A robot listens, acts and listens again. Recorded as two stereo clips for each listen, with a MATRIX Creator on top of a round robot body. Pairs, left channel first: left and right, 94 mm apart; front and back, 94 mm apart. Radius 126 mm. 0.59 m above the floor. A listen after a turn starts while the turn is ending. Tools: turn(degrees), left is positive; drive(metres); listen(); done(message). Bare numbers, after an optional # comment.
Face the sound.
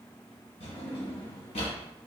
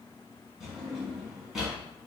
# The drawer: 95° left.
turn(95)
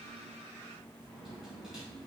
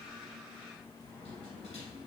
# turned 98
listen()
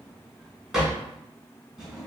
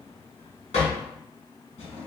done("Found it: a drawer, straight ahead.")